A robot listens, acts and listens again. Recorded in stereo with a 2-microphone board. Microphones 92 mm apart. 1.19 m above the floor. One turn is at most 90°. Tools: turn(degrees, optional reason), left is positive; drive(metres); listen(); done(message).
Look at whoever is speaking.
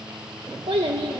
turn(degrees=-90)
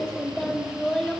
done("Facing the child speaking, 1 to 2 m away.")